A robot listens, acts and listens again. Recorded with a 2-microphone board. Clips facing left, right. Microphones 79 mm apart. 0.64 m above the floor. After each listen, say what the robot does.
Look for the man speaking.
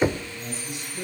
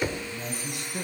Turn 65° right.
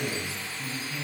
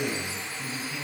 Facing the man speaking, over 4 m away.